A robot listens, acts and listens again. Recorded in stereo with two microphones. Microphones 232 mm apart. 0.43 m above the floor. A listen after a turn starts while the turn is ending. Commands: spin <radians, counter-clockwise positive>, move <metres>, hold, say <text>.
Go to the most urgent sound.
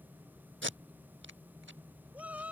spin -0.52
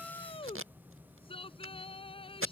spin 0.44
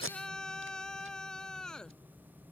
move 1.0
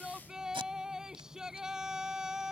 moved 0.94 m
move 1.0
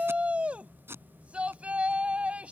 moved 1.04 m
move 1.0
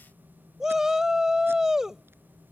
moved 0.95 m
move 1.0
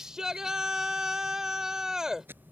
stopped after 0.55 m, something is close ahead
say Arrived at the shout, straight ahead.